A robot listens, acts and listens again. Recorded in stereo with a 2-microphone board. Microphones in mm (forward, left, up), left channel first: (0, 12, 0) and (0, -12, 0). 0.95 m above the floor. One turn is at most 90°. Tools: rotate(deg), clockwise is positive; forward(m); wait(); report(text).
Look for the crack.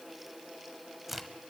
rotate(30)
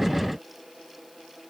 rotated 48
wait()
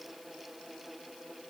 report("I heard a crack, but can't make it out now. It was about 40° left or 125° right.")